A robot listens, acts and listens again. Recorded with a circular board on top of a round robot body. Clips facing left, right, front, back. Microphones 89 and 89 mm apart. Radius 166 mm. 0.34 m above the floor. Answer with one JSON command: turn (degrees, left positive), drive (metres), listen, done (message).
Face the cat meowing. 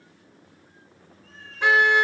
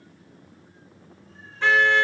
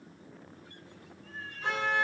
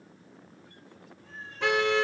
{"turn": 110}
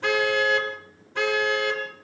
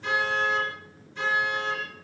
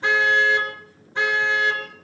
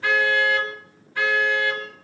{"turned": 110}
{"listen": true}
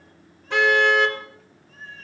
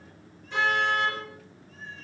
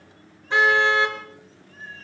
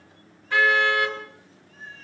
{"turn": 50}
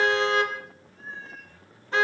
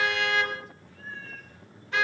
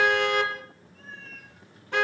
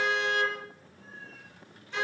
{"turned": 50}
{"turn": 20}
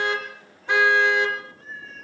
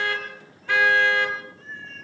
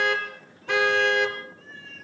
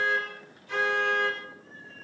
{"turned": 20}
{"done": "Facing the cat meowing."}